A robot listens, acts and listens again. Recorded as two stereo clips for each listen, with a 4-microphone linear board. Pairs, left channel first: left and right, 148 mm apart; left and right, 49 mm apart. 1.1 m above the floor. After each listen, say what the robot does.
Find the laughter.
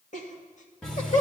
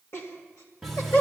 Turn 55° left.
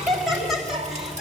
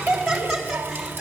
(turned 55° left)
Found it: laughter, straight ahead, 2 to 4 m away.